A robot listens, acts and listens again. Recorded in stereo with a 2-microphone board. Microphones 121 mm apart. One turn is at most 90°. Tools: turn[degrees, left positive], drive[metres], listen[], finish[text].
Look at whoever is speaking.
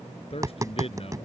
Thought: The man speaking: about 55° left or 125° left.
Action: turn[55]
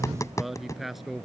Action: finish[Found it: a man speaking, straight ahead.]